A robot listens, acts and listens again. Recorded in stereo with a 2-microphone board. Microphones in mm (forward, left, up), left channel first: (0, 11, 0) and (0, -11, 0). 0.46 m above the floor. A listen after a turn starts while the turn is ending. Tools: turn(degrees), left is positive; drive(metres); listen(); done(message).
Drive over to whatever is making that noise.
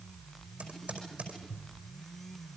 turn(degrees=-75)
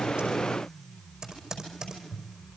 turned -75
turn(degrees=-35)
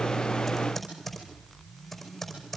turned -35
turn(degrees=10)
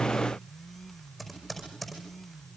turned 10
drive(metres=1.0)
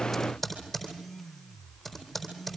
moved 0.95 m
drive(metres=1.0)
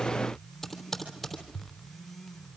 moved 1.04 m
turn(degrees=10)
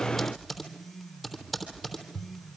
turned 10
drive(metres=1.0)
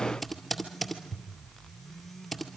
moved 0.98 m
drive(metres=1.0)
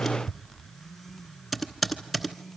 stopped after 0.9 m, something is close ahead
done("I am next to the typing on a keyboard.")